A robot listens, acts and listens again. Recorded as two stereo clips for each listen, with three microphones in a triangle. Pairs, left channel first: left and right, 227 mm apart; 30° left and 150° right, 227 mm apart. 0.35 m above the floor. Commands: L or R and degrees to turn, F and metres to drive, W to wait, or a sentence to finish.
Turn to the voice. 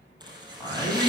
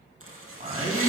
L160
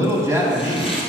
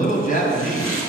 R15
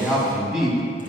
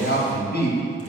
Facing the man speaking.